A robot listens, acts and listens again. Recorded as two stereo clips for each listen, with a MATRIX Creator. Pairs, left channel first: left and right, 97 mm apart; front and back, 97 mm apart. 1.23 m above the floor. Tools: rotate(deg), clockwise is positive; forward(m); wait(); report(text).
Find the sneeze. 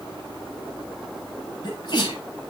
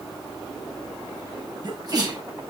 rotate(-130)
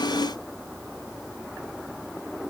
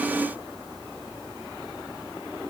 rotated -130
report("Facing where the sneeze came from. I can't hear it now.")